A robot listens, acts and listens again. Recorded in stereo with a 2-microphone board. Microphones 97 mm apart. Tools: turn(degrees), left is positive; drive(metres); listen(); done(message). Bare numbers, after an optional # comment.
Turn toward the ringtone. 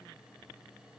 listen()
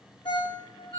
# The ringtone: about 55° left or 125° left.
turn(55)
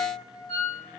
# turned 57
# So it is at 70° left.
turn(70)
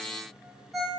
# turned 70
done("Found it: a ringtone, straight ahead, 2 to 4 m away.")